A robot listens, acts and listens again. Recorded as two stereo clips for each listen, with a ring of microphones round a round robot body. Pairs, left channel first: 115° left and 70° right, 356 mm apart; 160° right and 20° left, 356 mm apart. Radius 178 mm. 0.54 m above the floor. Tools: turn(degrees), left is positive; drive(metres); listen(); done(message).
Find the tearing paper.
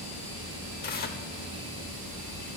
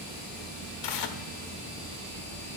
turn(degrees=180)
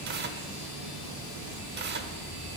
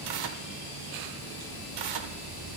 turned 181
done("Found it: tearing paper, straight ahead, under 1 m away.")